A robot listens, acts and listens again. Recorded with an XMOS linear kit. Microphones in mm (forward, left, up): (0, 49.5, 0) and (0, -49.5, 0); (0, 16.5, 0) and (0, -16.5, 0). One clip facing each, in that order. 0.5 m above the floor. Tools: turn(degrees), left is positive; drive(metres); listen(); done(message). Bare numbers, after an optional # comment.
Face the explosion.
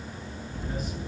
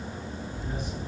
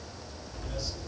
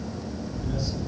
# The explosion: about 55° left or 125° left.
turn(55)
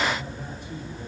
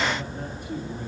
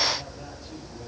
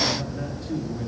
listen()
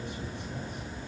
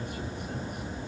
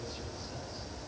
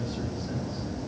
done("I heard an explosion, but can't make it out now. It was about straight ahead or 70° left.")